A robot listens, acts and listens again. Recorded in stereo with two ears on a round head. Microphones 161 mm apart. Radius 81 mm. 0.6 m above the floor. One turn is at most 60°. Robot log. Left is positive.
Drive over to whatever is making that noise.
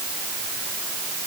cmd idle
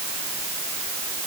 cmd idle
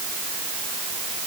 end: I can't make out anything.